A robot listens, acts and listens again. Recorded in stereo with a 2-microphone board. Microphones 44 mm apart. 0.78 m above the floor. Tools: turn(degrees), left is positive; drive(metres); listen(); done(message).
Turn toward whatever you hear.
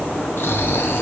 turn(degrees=60)
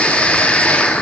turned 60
turn(degrees=30)
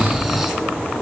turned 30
turn(degrees=-10)
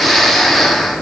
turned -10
done("Found it: snoring, straight ahead, 1 to 2 m away.")